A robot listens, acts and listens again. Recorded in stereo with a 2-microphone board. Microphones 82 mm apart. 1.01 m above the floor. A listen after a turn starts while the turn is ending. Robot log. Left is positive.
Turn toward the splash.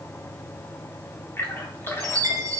note: The splash: about 30° left or 150° left.
cmd yaw +30
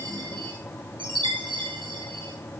cmd idle
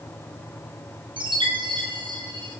end: I heard a splash, but can't make it out now. It was about straight ahead or 120° left.